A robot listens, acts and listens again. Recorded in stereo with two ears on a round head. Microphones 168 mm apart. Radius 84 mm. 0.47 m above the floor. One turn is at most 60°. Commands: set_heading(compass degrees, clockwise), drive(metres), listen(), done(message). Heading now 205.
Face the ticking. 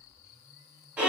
listen()
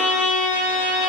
listen()
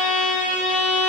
done("I can't make out ticking, only a violin.")